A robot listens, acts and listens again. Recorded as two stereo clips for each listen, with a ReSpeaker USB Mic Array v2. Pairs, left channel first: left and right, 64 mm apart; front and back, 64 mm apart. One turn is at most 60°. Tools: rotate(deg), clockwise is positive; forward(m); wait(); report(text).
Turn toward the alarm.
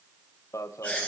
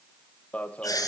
rotate(-60)
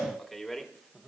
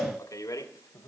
report("Found it: an alarm, straight ahead, 1 to 2 m away.")